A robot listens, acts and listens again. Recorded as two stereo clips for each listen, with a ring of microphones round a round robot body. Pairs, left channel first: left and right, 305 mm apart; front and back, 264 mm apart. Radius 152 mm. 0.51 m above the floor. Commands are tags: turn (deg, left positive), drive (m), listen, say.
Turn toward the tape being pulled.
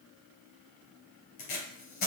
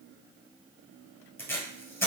<turn deg="80"/>
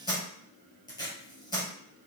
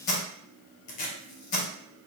<turn deg="15"/>
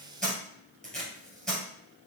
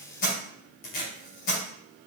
<say>Found it: tape being pulled, straight ahead.</say>